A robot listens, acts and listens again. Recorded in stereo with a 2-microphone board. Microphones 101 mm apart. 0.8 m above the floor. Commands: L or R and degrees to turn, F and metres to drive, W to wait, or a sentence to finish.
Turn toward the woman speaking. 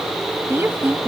R20
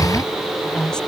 L10
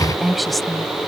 Facing the woman speaking.